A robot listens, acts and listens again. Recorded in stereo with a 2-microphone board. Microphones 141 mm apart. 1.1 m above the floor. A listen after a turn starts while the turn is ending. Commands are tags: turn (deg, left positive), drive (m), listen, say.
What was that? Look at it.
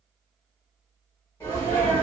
<turn deg="25"/>
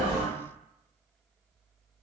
<turn deg="130"/>
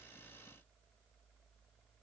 <say>Facing where the sneeze came from. I can't hear it now.</say>